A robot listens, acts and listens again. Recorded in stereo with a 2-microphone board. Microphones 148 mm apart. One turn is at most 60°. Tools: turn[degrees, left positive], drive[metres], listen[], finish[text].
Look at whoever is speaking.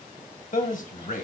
Thought: The man speaking: about 60° left or 120° left.
Action: turn[60]
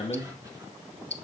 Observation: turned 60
Thought: So it is at 40° left.
Action: turn[40]
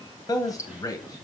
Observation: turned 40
Thought: The man speaking is now 25° left.
Action: turn[25]
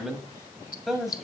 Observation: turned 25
Action: finish[Found it: a man speaking, straight ahead, 1 to 2 m away.]